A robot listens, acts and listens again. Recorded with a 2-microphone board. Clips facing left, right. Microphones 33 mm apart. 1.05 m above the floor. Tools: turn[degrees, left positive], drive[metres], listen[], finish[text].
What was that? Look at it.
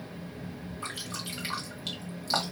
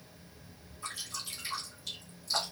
Thought: The dripping: about 55° left or 125° left.
Action: turn[55]
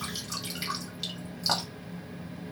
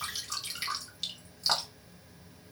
Action: finish[Facing the dripping.]